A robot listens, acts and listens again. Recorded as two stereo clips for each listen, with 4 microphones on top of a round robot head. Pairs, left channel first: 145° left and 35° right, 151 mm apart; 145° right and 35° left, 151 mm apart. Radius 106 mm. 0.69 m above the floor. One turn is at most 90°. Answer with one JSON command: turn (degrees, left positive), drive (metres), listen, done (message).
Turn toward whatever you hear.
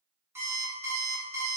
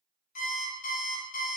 {"turn": -90}
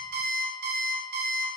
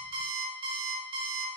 {"turn": -20}
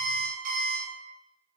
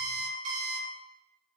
{"done": "Found it: an alarm clock, straight ahead."}